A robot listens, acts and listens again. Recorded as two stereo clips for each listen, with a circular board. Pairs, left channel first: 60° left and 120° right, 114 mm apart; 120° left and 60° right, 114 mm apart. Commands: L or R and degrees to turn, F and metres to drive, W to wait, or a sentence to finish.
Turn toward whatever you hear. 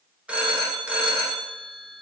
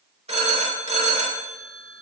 R40
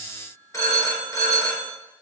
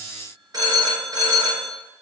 Found it: a phone ringing, straight ahead.